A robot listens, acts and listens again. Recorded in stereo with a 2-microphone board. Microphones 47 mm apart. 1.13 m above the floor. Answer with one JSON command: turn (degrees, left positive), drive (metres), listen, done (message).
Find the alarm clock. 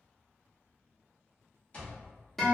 {"turn": 25}
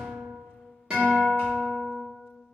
{"listen": true}
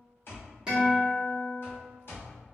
{"turn": 125}
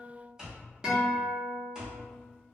{"turn": -15}
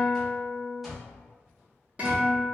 {"done": "Found it: an alarm clock, straight ahead."}